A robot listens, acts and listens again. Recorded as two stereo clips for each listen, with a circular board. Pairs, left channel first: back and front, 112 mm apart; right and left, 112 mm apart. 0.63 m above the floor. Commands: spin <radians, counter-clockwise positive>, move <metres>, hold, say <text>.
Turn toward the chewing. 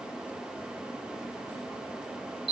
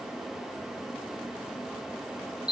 hold
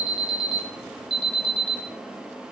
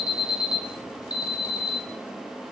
hold
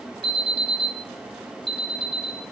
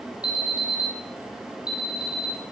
say I can't make out chewing, only an alarm.